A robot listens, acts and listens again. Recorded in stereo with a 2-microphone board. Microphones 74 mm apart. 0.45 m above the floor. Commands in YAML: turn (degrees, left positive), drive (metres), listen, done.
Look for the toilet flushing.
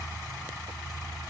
listen: true
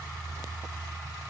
listen: true
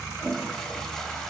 turn: 30
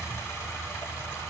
listen: true
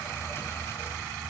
listen: true
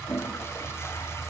turn: 140
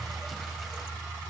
listen: true
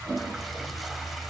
done: "Found it: a toilet flushing, straight ahead."